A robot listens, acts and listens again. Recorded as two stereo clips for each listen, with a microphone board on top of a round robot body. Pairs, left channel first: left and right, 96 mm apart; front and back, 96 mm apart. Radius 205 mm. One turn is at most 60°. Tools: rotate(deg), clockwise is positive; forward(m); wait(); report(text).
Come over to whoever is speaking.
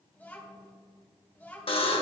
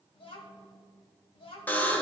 rotate(-15)
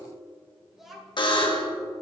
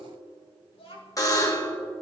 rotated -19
forward(1.0)
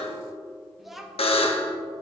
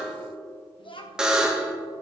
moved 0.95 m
forward(1.0)
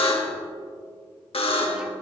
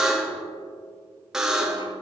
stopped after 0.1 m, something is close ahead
wait()
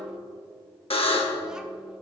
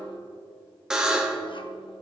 wait()
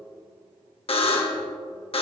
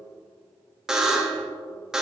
report("I heard a child speaking from this way, but can't make it out now. I did not reach it.")